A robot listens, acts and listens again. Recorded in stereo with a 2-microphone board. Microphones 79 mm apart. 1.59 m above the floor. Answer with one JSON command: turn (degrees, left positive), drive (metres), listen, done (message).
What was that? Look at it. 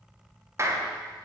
{"turn": -35}
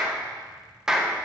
{"done": "Found it: a clap, straight ahead."}